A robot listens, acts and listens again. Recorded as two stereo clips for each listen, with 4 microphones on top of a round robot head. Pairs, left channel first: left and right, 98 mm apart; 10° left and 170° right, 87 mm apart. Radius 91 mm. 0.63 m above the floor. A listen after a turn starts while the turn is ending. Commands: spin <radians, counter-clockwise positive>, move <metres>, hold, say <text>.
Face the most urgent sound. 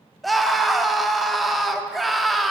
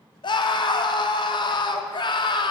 say Facing the scream, 1 to 2 m away.